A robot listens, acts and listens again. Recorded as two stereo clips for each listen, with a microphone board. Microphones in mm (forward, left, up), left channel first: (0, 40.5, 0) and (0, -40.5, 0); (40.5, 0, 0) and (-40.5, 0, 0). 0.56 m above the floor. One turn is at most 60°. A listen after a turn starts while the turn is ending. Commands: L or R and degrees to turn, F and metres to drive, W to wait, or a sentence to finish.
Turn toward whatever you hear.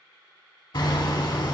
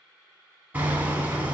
L60
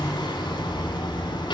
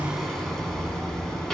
L60
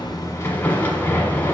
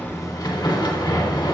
L25
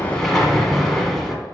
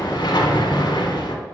Found it: hammering, straight ahead.